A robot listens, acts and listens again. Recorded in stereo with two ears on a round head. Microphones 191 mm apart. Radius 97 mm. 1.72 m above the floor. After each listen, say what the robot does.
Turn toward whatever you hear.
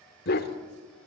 Turn 50° left.
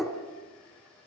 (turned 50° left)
Found it: a dog barking, straight ahead.